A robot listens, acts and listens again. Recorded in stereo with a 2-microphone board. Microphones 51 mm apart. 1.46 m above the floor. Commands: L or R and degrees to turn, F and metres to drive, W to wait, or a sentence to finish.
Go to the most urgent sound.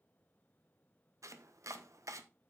W
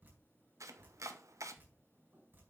W
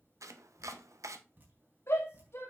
L60
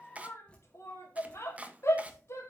L60
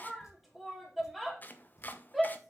F1.0
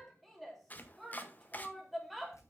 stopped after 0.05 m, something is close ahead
Something is in my way. I am facing the shout but have not reached it.